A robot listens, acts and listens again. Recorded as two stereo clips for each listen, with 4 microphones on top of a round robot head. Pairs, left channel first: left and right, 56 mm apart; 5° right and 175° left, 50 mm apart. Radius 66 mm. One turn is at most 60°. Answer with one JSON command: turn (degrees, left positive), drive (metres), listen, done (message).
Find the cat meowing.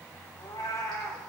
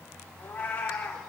{"turn": 40}
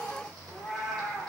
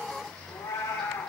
{"done": "Facing the cat meowing."}